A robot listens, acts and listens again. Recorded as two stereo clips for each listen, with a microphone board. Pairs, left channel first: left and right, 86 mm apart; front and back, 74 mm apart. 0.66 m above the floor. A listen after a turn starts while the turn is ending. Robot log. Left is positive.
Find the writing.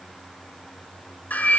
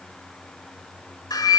cmd idle
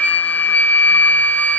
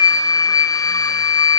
cmd idle
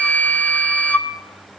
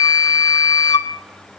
end: I can't make out writing, only a flute.